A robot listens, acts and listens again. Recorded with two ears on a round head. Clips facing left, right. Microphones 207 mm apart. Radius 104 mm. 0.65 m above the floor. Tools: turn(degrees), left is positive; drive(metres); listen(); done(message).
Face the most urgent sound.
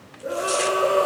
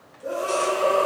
turn(degrees=20)
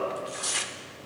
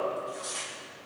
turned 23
listen()
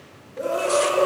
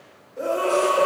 done("Facing the scream.")